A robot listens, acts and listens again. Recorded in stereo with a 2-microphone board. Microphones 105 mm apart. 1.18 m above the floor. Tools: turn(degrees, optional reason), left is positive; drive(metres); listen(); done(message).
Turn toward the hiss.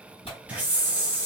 turn(degrees=-30)
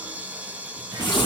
listen()
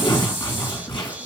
listen()
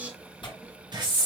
turn(degrees=-135, reason="So it is at 135° right.")
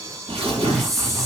done("Found it: a hiss, straight ahead, 1 to 2 m away.")